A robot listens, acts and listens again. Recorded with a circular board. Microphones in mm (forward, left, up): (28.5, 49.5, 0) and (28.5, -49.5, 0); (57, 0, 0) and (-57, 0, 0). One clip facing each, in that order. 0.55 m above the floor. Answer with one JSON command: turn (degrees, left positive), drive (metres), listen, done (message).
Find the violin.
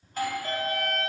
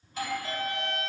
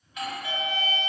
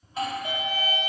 {"turn": 60}
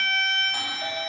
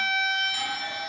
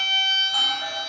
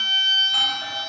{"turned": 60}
{"done": "Found it: a violin, straight ahead, 1 to 2 m away."}